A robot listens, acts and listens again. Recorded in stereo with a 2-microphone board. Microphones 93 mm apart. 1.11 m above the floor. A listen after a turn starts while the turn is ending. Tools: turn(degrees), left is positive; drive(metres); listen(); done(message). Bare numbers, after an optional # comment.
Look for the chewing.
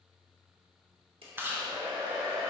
# The chewing: about 25° right or 155° right.
turn(-25)
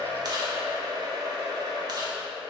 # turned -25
listen()
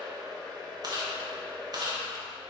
# So it is at 125° right.
turn(-125)
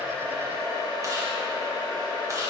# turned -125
listen()
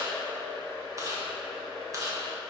# The chewing is now 40° right.
turn(-40)
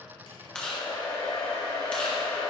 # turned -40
# The chewing is now 10° left.
turn(10)
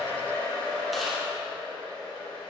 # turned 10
listen()
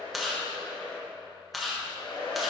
done("Facing the chewing, 1 to 2 m away.")